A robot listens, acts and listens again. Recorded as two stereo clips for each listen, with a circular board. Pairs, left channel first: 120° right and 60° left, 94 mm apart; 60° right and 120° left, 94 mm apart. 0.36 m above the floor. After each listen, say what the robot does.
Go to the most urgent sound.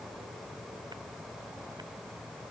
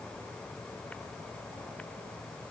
Keep listening.
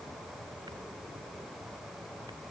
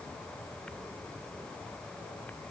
Keep listening.
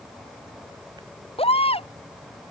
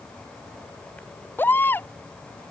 Turn 130° right.
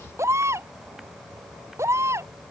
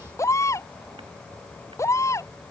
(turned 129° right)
Drive 1.0 m forward.
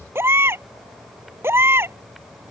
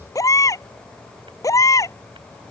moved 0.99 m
Drive 1.0 m forward.
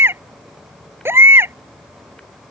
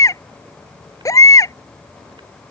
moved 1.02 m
Drive 1.0 m forward.
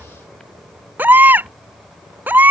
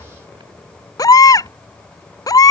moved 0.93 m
Turn 10° right.
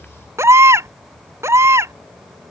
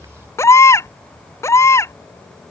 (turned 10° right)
Drive 1.0 m forward.
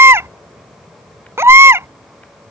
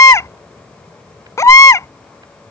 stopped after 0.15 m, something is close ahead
I am next to the baby crying.